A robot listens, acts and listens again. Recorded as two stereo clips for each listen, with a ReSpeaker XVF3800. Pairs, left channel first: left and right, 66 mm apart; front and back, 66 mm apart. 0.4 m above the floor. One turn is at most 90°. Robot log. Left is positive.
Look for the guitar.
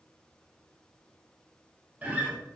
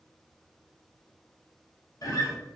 note: The guitar: 20° right.
cmd yaw -20
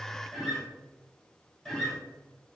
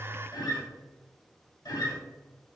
end: Facing the guitar, 1 to 2 m away.